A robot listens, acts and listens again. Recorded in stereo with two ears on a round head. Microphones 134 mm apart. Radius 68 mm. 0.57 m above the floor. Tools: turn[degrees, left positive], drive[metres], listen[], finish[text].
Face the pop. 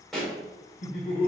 Action: turn[30]
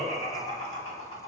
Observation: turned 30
Action: listen[]
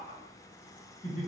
Action: finish[I heard a pop, but can't make it out now. It was about 25° right or 145° left.]